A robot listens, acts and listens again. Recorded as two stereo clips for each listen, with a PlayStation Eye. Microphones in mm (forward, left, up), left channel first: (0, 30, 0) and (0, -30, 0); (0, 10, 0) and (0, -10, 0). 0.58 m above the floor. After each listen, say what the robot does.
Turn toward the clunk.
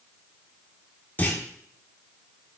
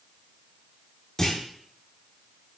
Turn 30° left.
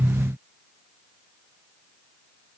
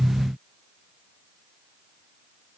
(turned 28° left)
Keep listening.
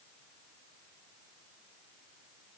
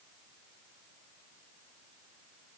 I heard a clunk, but can't make it out now. It was about straight ahead or 125° left.